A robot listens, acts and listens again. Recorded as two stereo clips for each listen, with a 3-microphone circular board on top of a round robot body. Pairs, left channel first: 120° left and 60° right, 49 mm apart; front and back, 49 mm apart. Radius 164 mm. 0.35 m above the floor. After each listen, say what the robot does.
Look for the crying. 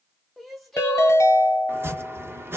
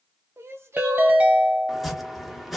Turn 150° right.
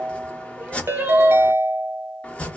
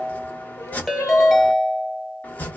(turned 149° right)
Keep listening.
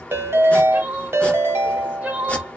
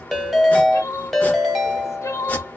Found it: crying, straight ahead.